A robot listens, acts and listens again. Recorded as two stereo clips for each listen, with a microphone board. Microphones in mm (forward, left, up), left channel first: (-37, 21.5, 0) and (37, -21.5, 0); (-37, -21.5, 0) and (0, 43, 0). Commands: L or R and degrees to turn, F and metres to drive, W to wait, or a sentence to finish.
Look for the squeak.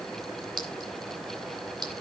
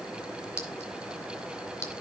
W
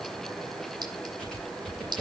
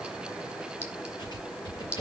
R125
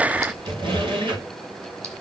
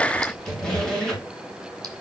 R40
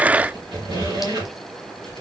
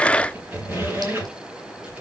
Facing the squeak.